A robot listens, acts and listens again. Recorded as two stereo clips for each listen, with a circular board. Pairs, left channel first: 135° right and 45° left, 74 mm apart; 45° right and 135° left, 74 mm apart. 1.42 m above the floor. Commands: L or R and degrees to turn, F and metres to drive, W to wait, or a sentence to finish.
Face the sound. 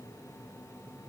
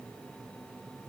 W
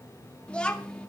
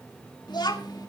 R60
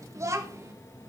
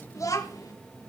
Found it: a child speaking, straight ahead, 2 to 4 m away.